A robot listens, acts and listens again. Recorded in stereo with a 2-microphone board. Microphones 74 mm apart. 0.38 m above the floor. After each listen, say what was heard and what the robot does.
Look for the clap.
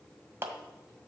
The clap: about 30° right or 150° right. Turn 30° right.
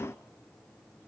Keep listening.
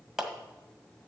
Found it: a clap, straight ahead.